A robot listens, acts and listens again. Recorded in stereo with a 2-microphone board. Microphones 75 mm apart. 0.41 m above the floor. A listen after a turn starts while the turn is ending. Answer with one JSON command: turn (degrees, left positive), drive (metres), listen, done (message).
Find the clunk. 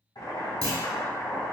{"turn": -55}
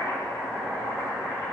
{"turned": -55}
{"listen": true}
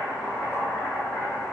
{"done": "I heard a clunk, but can't make it out now. It was about straight ahead or 70° right."}